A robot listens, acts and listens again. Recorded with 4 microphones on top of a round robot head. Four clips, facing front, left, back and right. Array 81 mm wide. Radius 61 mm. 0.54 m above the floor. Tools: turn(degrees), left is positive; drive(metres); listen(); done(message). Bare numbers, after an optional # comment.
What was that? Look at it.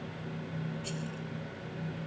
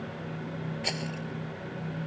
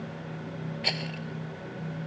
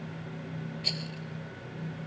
# The rattle: 150° left.
turn(150)
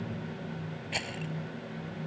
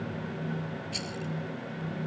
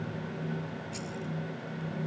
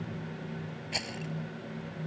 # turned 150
# The rattle is now 35° right.
turn(-35)
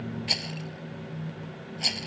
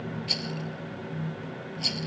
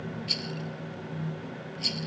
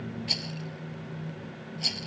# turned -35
done("Facing the rattle.")